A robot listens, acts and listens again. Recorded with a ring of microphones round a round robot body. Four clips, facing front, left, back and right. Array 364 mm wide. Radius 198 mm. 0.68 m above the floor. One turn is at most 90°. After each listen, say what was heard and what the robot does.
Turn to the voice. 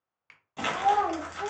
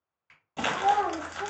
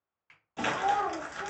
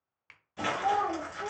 The child speaking: 35° left. Turn 35° left.
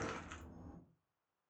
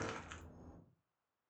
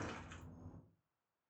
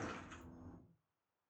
Keep listening.
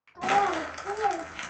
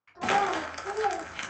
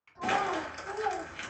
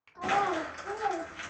Facing the child speaking, 1 to 2 m away.